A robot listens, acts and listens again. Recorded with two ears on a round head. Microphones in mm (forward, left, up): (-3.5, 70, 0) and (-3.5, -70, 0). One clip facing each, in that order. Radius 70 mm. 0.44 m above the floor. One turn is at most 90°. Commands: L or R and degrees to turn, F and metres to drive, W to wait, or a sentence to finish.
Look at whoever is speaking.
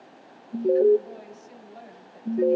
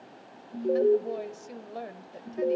R60
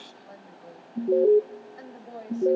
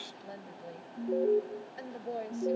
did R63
R35
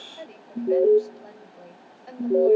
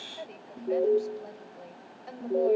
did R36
Facing the woman speaking, 1 to 2 m away.